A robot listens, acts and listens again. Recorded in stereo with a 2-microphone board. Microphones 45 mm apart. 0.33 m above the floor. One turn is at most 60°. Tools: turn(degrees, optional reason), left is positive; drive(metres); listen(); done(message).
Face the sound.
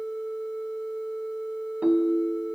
turn(degrees=-35, reason="The ringtone: about 35° right or 145° right.")
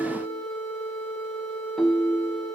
done("Found it: a ringtone, straight ahead.")